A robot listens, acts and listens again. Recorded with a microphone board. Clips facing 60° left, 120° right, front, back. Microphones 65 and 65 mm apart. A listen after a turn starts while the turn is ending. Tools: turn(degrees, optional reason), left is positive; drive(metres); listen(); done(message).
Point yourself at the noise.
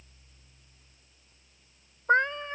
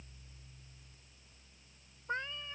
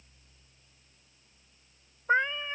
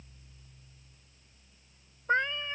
turn(degrees=80, reason="The cat meowing: 80° left.")
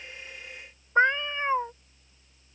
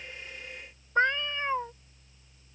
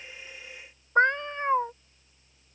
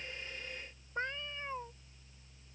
turn(degrees=-10, reason="The cat meowing is now 10° right.")
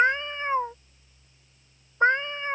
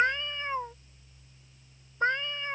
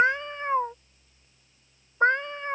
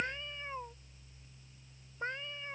done("Found it: a cat meowing, straight ahead.")